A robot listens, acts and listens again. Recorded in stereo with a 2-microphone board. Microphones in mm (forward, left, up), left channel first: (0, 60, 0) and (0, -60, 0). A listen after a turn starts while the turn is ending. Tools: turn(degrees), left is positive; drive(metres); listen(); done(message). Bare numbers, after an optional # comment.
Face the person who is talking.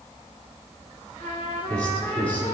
turn(30)
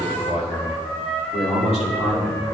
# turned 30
# So it is at 120° left.
turn(120)
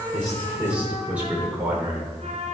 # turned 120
# The man speaking is now 15° right.
turn(-15)
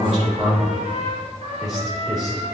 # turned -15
done("Found it: a man speaking, straight ahead, 2 to 4 m away.")